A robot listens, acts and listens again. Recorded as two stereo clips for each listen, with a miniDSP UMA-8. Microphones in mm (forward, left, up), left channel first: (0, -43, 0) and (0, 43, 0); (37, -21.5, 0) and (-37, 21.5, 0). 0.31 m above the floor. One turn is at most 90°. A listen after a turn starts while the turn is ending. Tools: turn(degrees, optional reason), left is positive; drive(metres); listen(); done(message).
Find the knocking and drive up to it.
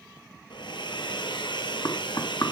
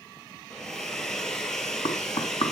turn(degrees=-50, reason="The knocking: 50° right.")
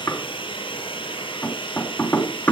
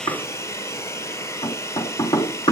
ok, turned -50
turn(degrees=-25, reason="The knocking is now 25° right.")
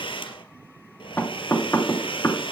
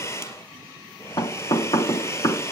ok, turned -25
turn(degrees=-25, reason="The knocking is now 25° right.")
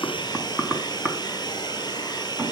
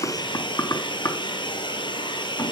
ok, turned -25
turn(degrees=10, reason="The knocking is now 10° left.")
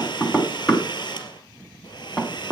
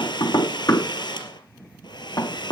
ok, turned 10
drive(metres=1.0)
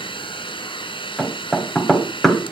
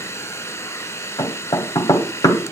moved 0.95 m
drive(metres=1.0)
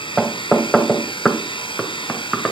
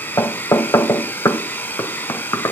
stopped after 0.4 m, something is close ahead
done("Arrived at the knocking, straight ahead.")